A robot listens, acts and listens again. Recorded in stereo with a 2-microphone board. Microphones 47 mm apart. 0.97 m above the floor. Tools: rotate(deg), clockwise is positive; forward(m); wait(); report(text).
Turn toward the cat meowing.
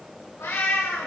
rotate(-75)
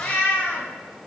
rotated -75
rotate(-25)
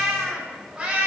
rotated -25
rotate(25)
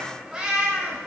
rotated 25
rotate(20)
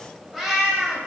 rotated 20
report("Found it: a cat meowing, straight ahead.")